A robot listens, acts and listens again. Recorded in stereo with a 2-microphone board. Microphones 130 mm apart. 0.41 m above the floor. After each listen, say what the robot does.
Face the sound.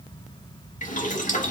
Turn 70° left.
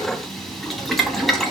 Facing the boiling.